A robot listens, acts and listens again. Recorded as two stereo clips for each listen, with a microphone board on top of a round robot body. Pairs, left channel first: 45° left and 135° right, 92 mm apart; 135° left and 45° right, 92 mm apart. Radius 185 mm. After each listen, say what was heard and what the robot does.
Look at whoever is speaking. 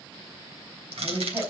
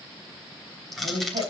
The woman speaking: 60° right. Turn 60° right.
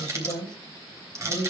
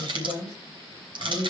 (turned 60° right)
Facing the woman speaking, over 4 m away.